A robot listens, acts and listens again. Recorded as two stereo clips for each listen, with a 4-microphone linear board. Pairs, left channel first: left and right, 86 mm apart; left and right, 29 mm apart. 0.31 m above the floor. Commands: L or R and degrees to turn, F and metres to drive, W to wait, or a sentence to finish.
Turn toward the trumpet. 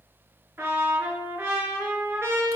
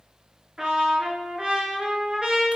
R30
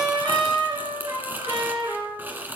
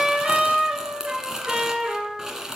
R120
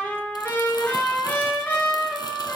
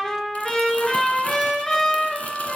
L25
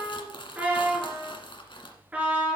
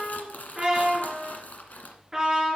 R15
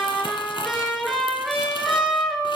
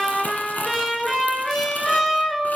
Facing the trumpet, 2 to 4 m away.